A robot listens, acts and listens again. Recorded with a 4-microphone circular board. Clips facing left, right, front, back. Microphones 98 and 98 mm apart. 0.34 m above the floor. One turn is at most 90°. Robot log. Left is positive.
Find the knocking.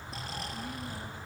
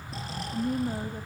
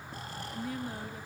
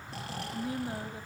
cmd idle
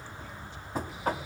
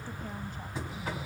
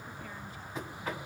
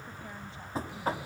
note: The knocking: 125° left.
cmd yaw +90
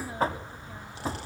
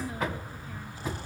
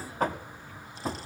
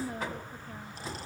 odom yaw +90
note: The knocking is now 35° left.
cmd yaw +35
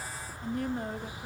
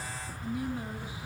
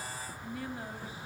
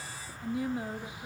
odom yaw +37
cmd idle
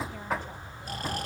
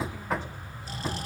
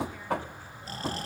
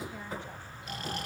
end: Facing the knocking.